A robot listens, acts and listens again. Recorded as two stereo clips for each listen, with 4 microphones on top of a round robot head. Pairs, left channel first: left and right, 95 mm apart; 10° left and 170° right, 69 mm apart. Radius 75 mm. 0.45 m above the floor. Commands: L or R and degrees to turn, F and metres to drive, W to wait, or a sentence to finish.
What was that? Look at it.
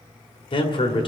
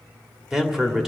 L105
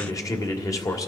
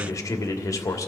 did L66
L40
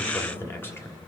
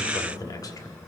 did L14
L25
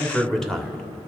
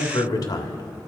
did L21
Found it: a man speaking, straight ahead, 1 to 2 m away.